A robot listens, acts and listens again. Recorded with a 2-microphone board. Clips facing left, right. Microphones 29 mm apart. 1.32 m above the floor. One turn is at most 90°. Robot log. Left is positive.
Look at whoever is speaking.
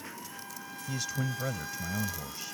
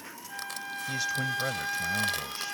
cmd yaw -30
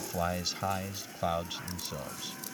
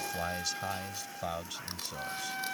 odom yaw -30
note: So it is at 20° left.
cmd yaw +20
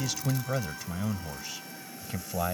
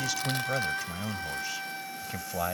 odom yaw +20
end: Facing the man speaking.